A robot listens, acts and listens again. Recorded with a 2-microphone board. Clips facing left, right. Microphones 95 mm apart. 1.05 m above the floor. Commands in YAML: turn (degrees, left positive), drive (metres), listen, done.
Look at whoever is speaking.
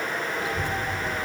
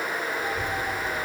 turn: 90
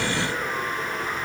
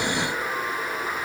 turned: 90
turn: -10
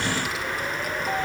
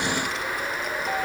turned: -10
done: "Found it: a child speaking, straight ahead, 1 to 2 m away."